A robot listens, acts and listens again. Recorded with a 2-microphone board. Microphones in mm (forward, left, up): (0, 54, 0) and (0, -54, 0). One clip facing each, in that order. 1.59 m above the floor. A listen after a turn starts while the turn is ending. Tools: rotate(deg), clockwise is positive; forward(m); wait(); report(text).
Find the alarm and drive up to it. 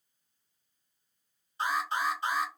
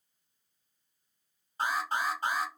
rotate(50)
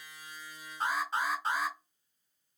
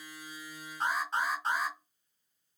forward(1.0)
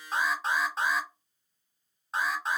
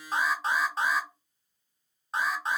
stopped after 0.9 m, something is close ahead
report("I am next to the alarm.")